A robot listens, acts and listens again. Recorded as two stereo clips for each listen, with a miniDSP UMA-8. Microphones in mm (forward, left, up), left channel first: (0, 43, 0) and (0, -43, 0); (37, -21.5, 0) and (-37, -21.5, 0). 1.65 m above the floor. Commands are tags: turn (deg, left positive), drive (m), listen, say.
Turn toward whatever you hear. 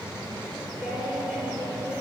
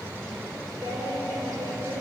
<turn deg="180"/>
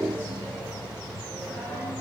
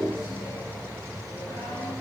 <listen/>
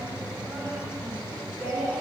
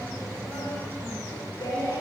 <turn deg="25"/>
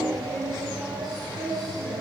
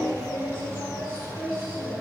<say>Facing the singing.</say>